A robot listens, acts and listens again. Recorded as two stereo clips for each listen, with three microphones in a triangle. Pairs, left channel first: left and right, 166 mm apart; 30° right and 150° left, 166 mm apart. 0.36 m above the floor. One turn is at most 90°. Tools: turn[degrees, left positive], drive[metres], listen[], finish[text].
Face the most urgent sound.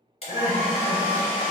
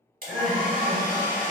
Thought: The crying: 120° right.
Action: turn[-90]
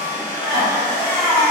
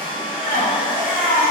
Thought: The crying is now 30° right.
Action: turn[-30]
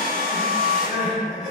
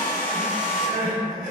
Action: finish[Facing the crying.]